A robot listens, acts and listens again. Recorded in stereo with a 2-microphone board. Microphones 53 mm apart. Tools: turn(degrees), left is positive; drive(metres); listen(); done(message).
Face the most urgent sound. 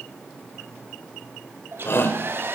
turn(degrees=50)
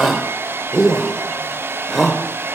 done("Facing the shout, 2 to 4 m away.")